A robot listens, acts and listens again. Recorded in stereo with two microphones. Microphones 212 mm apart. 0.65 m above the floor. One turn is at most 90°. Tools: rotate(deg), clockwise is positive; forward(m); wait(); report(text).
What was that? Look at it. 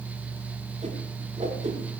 rotate(35)
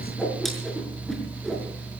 report("Facing the whoosh.")